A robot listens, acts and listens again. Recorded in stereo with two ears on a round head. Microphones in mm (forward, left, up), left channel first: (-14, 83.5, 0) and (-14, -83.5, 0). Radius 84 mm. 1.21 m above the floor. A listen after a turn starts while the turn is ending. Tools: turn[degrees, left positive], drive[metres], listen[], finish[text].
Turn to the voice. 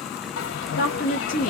Thought: The woman speaking: about 45° left or 135° left.
Action: turn[45]
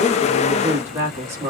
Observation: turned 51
Thought: So it is at 15° right.
Action: turn[-15]
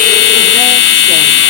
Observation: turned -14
Action: listen[]
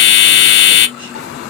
Action: listen[]
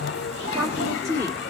Thought: The woman speaking is now 15° right.
Action: turn[-15]
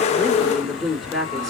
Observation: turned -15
Action: finish[Found it: a woman speaking, straight ahead, 2 to 4 m away.]